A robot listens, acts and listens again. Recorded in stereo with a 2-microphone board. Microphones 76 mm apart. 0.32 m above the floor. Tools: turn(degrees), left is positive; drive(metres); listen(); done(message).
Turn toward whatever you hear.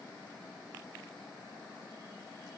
listen()
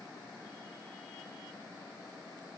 listen()
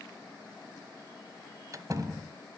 turn(degrees=-40)
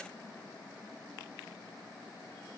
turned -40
listen()
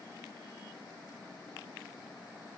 done("I heard a door slam, but can't make it out now. It was about straight ahead or 100° right.")